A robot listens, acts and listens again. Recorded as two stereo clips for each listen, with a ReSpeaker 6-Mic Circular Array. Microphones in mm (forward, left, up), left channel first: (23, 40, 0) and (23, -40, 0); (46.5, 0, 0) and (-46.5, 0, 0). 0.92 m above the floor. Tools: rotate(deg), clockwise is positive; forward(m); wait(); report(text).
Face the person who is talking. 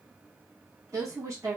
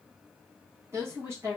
rotate(125)
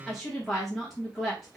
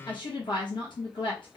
report("Facing the woman speaking.")